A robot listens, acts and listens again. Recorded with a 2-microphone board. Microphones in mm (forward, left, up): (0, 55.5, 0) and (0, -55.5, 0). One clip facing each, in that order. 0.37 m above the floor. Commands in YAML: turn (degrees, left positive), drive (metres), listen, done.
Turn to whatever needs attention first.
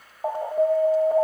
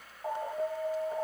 turn: 60
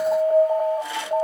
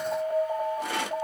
turn: 35
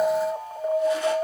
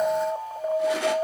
done: "Facing the alarm, 1 to 2 m away."